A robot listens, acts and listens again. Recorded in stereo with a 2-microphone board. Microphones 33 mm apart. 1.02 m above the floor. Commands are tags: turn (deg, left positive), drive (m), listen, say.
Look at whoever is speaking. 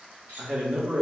<turn deg="-35"/>
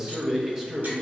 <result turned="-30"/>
<turn deg="-15"/>
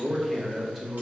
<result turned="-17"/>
<say>Facing the man speaking.</say>